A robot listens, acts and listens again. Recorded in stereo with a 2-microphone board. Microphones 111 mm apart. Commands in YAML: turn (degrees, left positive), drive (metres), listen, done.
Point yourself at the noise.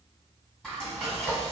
turn: 30
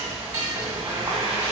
turn: -30
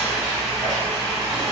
done: "Facing the frying."